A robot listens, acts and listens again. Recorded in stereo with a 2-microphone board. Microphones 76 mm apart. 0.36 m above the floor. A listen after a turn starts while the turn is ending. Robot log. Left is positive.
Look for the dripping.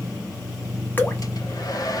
note: The dripping: about 25° left or 155° left.
cmd yaw +25
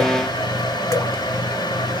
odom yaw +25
cmd idle
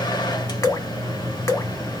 note: So it is at 130° left.
cmd yaw +130
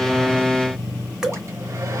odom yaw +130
note: The dripping is now 10° right.
cmd yaw -10
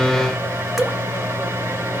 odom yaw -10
end: Facing the dripping, 1 to 2 m away.